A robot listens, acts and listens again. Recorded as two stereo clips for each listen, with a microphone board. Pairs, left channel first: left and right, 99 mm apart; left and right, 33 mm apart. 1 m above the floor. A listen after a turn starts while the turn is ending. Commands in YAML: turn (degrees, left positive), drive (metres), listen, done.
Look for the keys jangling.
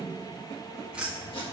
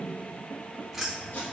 turn: -30
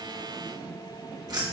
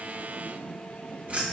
turn: -140
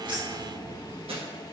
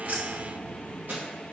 turn: -25
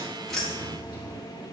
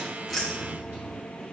turn: 10
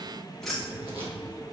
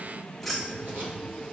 done: "Found it: keys jangling, straight ahead, 1 to 2 m away."